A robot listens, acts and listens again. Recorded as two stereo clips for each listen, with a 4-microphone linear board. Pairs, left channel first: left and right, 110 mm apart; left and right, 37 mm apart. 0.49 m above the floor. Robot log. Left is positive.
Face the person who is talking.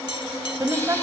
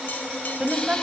note: The woman speaking: about 30° right or 150° right.
cmd yaw -30
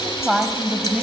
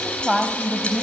end: Facing the woman speaking.